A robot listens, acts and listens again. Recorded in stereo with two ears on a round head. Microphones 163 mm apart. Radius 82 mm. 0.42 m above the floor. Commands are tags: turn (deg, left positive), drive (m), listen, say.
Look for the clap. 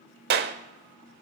<turn deg="-55"/>
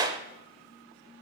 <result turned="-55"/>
<turn deg="-25"/>
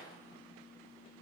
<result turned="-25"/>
<listen/>
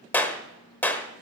<turn deg="10"/>
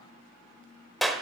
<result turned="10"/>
<say>Facing the clap.</say>